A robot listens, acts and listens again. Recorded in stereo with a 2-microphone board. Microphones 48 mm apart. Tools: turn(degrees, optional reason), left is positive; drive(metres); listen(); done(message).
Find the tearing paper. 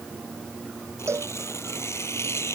turn(degrees=75, reason="The tearing paper: about 75° left or 105° left.")
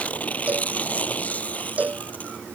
turn(degrees=30, reason="So it is at 30° left.")
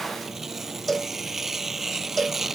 done("Found it: tearing paper, straight ahead.")